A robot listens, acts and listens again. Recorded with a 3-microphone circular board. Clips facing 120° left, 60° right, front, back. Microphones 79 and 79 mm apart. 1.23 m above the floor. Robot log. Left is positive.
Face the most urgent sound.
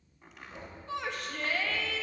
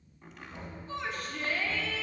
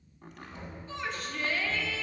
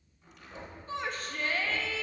note: The shout: 135° left.
cmd yaw +135
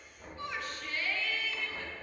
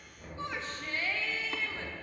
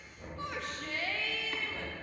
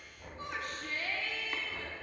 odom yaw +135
end: Facing the shout.